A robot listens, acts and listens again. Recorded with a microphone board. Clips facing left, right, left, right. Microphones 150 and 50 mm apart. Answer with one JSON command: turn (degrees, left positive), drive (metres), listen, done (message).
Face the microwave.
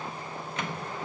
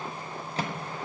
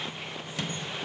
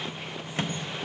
{"turn": -35}
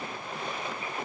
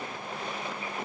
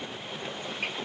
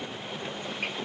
{"listen": true}
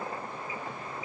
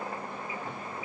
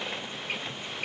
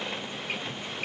{"listen": true}
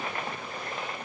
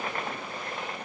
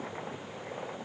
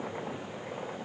{"done": "I heard a microwave, but can't make it out now. It was about straight ahead or 110° right."}